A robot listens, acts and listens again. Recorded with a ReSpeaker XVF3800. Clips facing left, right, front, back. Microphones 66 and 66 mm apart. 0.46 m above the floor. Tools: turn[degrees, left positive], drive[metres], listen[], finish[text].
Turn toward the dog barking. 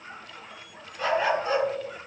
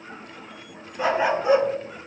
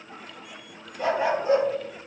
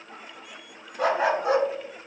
Thought: The dog barking: 170° right.
Action: turn[-170]
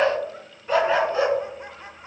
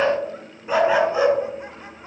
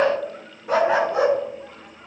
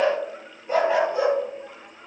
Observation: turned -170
Thought: The dog barking is now 15° right.
Action: turn[-15]
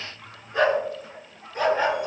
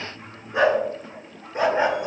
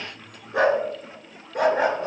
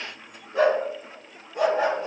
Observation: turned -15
Thought: The dog barking is now 25° right.
Action: turn[-25]
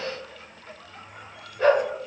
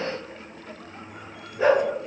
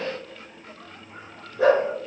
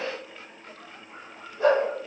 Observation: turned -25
Thought: The dog barking is now 10° right.
Action: turn[-10]
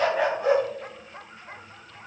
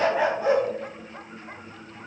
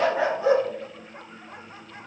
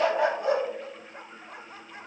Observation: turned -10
Action: finish[Facing the dog barking.]